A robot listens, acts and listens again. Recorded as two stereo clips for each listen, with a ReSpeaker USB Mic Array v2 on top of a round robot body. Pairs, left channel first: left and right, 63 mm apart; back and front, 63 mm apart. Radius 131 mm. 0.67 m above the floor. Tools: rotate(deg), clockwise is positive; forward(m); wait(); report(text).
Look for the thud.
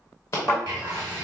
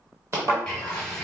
rotate(40)
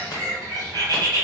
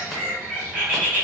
report("I heard a thud from this way, but can't make it out now.")